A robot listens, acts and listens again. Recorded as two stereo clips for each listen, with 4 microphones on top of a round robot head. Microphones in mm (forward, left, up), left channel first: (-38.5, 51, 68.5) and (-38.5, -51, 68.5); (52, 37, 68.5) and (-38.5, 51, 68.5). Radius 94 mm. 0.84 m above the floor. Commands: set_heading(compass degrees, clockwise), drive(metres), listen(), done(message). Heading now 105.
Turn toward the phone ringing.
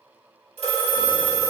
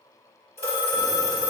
set_heading(180)
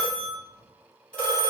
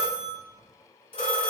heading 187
set_heading(177)
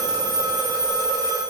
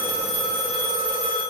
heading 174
done("Facing the phone ringing.")